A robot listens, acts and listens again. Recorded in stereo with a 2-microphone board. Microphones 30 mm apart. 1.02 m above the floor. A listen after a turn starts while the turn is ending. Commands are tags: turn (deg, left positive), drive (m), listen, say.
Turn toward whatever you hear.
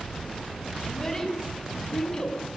<turn deg="20"/>
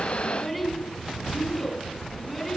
<turn deg="30"/>
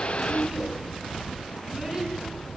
<turn deg="-25"/>
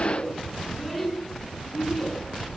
<say>Facing the child speaking, over 4 m away.</say>